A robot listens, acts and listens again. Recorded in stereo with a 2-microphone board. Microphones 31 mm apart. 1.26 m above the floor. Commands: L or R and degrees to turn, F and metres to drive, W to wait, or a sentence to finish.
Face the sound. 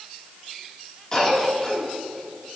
L25
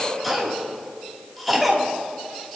Found it: a cough, straight ahead.